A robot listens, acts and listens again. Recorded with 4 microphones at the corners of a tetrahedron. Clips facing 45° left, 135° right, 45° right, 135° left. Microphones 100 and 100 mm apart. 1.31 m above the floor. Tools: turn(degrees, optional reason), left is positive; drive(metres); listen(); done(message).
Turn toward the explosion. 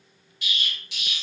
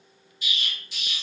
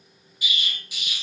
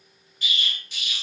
turn(degrees=35, reason="The explosion: 35° left.")
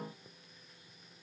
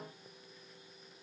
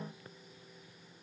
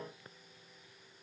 done("Facing where the explosion came from. I can't hear it now.")